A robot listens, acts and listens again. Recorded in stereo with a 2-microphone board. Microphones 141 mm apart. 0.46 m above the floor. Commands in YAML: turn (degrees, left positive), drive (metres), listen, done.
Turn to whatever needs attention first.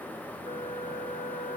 listen: true
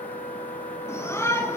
turn: 20
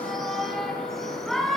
done: "Facing the shout."